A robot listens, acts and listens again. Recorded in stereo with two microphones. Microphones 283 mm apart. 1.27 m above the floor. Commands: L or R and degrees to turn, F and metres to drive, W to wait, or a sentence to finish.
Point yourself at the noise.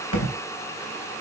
L70
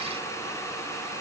W
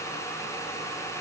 I heard a thud, but can't make it out now. It was about straight ahead or 40° left.